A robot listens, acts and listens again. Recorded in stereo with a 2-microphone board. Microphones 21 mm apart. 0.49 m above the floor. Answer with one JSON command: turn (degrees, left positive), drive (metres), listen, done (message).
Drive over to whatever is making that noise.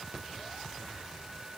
{"listen": true}
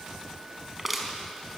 {"turn": -30}
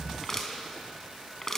{"turn": 15}
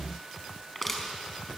{"drive": 1.0}
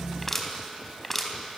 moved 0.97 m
{"drive": 1.0}
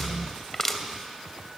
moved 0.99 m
{"turn": 15}
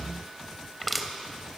{"drive": 1.0}
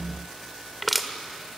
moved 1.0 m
{"drive": 1.0}
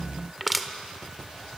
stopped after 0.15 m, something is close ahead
{"turn": -10}
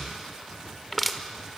{"done": "Arrived at the crushing, straight ahead."}